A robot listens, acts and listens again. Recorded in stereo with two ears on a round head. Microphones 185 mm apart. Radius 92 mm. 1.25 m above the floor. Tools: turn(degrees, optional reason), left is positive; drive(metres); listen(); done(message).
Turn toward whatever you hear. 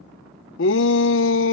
turn(degrees=65, reason="The shout: about 65° left or 115° left.")
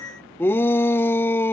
turn(degrees=10, reason="So it is at 10° left.")
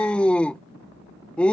done("Found it: a shout, straight ahead.")